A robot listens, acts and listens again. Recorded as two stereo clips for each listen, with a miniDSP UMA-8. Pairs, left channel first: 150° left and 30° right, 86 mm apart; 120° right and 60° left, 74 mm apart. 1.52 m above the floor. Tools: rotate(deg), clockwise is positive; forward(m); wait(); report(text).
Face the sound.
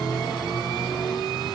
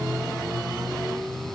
wait()
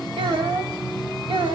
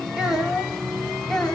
rotate(40)
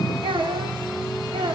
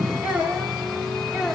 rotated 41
rotate(25)
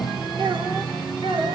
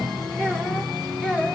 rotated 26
rotate(15)
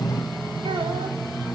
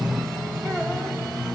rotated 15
wait()
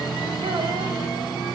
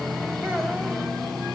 wait()
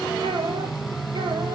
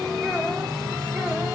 report("I heard a child speaking from this way, but can't make it out now.")